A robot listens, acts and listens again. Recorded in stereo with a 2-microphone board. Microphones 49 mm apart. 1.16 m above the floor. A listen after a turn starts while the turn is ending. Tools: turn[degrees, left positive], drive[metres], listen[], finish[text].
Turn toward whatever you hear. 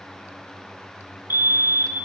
Thought: The fire alarm: about 50° right or 130° right.
Action: turn[-50]
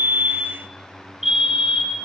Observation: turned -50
Thought: So it is at 10° right.
Action: turn[-10]
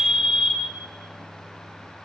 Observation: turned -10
Action: finish[Found it: a fire alarm, straight ahead.]